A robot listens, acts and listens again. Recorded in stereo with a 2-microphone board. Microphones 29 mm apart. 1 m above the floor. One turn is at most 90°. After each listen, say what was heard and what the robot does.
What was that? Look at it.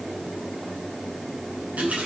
Turn 90° right.
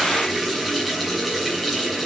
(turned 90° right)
Facing the running tap.